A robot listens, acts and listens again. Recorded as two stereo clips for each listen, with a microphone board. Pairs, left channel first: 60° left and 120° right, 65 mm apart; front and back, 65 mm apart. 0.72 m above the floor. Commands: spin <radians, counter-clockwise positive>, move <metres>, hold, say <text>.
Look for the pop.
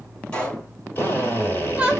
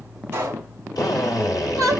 spin 2.27
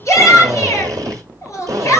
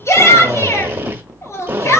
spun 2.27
say Facing where the pop came from. I can't hear it now.